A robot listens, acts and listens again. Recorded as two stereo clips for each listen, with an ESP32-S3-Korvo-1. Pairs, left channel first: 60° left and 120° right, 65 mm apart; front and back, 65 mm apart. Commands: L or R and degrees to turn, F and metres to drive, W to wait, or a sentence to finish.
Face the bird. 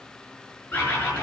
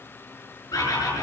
Facing the bird.